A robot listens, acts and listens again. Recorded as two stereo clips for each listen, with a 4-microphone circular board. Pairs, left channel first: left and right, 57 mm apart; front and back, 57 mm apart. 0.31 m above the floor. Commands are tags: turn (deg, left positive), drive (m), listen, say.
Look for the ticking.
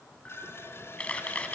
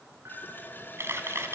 <listen/>
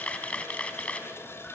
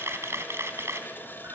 <listen/>
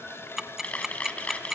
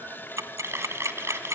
<turn deg="-175"/>
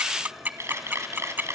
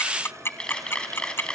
<turn deg="-40"/>
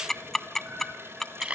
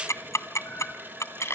<say>Facing the ticking.</say>